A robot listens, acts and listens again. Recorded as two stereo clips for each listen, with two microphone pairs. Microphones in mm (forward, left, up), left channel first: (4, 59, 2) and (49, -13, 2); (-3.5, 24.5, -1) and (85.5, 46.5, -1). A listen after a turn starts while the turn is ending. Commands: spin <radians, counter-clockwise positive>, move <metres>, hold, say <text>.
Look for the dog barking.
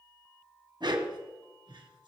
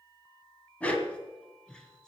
spin -1.48
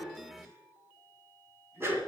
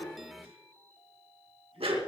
say Found it: a dog barking, straight ahead.